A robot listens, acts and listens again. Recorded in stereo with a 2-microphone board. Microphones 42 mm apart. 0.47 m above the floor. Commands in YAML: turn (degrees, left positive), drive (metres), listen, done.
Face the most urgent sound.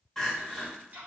turn: 30
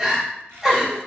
turn: -15
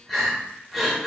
done: "Facing the crying, under 1 m away."